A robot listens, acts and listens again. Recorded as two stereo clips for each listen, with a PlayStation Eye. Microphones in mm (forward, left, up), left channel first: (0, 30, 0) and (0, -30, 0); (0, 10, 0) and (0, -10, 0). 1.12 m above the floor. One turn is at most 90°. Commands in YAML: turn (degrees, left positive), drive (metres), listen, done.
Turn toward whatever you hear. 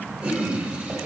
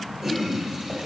turn: -20
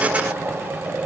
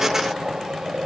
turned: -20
turn: -90
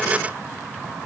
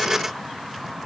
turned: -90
turn: -55
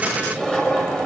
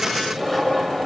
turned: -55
turn: 10
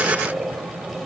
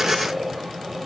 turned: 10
done: "Found it: a toilet flushing, straight ahead, over 4 m away."